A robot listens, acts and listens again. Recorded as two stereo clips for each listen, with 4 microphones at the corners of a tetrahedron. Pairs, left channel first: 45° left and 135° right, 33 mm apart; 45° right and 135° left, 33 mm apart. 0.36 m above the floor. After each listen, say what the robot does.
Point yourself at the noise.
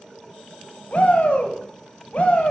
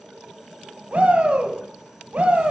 Turn 90° left.
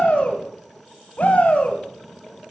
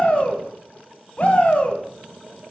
Facing the shout.